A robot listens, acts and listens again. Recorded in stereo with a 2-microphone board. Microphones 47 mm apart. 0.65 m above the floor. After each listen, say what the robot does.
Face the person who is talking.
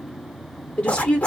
Turn 25° left.
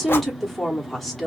Facing the woman speaking.